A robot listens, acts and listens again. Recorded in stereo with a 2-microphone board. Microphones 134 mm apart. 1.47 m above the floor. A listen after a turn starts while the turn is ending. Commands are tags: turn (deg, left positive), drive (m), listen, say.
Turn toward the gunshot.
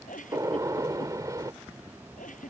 <turn deg="-25"/>
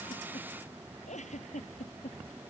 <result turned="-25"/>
<listen/>
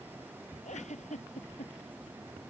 <say>I heard a gunshot, but can't make it out now. It was about straight ahead or 130° right.</say>